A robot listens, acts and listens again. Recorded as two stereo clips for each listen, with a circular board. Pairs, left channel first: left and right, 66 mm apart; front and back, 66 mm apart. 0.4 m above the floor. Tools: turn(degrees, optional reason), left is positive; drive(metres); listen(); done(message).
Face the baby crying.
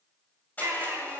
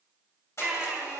turn(degrees=-115, reason="The baby crying: 115° right.")
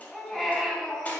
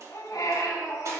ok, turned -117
done("Found it: a baby crying, straight ahead, 2 to 4 m away.")